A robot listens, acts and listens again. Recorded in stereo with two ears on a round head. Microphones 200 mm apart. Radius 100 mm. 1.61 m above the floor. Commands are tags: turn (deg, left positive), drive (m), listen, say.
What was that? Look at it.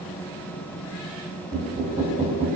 <turn deg="-30"/>
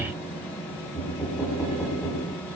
<say>Facing the knocking.</say>